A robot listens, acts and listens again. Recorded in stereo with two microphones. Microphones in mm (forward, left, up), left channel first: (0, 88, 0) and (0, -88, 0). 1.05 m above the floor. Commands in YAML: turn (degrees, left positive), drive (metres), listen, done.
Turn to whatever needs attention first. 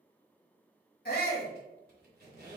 turn: 65
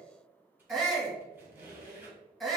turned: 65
done: "Facing the shout, 1 to 2 m away."